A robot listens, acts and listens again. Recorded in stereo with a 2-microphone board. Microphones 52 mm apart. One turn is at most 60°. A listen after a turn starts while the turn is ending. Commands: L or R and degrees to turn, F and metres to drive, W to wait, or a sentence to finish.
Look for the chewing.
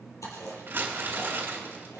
L60
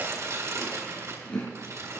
L25
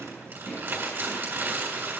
Facing the chewing, 2 to 4 m away.